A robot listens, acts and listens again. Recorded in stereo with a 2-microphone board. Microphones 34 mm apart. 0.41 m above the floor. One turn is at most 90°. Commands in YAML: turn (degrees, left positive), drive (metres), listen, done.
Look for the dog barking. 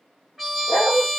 turn: 90
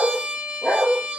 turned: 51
turn: 40
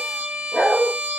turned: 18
turn: 30
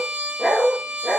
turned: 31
turn: 15
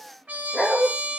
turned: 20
turn: 10
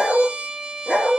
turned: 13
done: "Facing the dog barking."